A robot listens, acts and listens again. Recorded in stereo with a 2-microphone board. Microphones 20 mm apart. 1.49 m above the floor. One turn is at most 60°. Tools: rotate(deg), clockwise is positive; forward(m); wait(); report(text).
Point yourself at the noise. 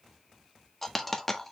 rotate(-30)
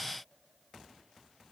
wait()
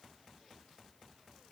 report("I heard a dropped coin, but can't make it out now. It was about 20° right or 140° left.")